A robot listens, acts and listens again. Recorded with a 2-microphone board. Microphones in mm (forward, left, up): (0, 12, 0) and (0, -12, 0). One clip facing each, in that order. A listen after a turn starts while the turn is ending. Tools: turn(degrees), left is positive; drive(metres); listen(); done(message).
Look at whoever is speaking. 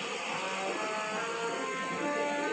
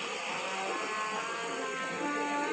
listen()
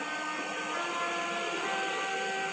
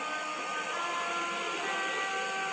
listen()
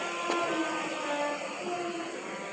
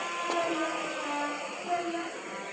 turn(degrees=-45)
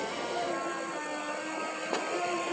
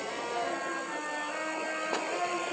listen()
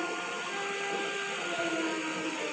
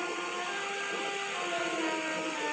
listen()
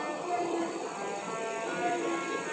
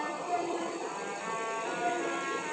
done("Facing the child speaking, 1 to 2 m away.")